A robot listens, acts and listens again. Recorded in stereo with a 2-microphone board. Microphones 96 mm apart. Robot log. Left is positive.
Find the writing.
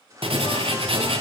note: The writing: about 70° right or 110° right.
cmd yaw -70
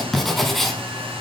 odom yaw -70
end: Facing the writing.